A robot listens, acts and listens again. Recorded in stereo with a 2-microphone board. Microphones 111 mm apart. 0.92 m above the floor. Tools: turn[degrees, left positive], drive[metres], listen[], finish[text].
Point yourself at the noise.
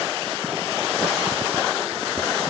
Action: listen[]
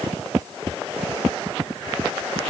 Action: listen[]
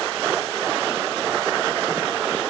Action: finish[I can't make out anything to turn to.]